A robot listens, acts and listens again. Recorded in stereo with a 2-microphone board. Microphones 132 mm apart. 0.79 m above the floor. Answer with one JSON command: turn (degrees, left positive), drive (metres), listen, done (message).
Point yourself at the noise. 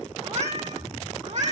{"turn": -65}
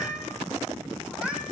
{"turn": -10}
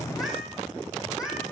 {"done": "Found it: a cat meowing, straight ahead."}